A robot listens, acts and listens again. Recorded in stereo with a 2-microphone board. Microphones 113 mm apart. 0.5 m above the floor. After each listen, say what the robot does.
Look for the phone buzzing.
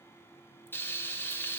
Keep listening.
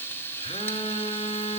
Turn 60° left.
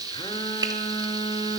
Turn 50° left.
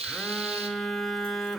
Found it: a phone buzzing, straight ahead.